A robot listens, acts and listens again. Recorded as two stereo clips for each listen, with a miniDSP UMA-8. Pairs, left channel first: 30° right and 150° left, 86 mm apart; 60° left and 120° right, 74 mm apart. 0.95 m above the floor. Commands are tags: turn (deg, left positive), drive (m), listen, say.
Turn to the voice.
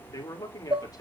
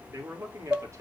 <turn deg="-70"/>
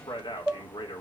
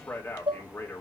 <say>Facing the man speaking.</say>